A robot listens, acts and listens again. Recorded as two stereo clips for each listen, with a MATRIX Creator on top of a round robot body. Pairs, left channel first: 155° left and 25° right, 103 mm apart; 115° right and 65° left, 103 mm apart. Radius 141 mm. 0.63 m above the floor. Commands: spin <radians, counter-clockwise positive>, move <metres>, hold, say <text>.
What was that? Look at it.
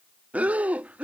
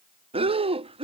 spin 0.96
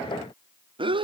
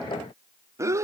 spin 0.17
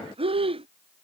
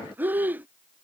say Facing the breathing.